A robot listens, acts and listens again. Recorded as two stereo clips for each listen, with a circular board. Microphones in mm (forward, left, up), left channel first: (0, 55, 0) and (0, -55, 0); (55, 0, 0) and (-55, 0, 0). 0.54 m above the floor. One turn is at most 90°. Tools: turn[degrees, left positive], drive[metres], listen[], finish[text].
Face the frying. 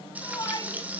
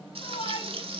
Thought: The frying: 165° right.
Action: turn[-90]
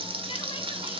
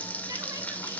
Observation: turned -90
Thought: The frying is now 75° right.
Action: turn[-75]
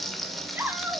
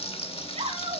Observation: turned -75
Action: finish[Found it: frying, straight ahead, 1 to 2 m away.]